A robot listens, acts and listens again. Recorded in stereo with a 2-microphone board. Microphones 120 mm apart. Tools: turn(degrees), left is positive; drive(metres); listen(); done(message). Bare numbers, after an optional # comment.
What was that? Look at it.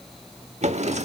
# The drawer: about 70° right or 110° right.
turn(-70)
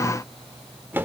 # So it is at 20° right.
turn(-20)
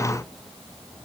listen()
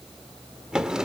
done("Found it: a drawer, straight ahead.")